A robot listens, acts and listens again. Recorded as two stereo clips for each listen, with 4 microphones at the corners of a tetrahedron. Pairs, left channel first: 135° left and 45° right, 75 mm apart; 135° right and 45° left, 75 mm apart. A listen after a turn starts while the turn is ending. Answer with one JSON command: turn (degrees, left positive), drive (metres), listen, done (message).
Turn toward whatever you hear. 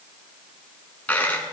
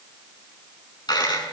{"turn": -155}
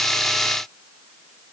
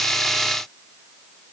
{"done": "I heard a dropped coin from this way, but can't make it out now."}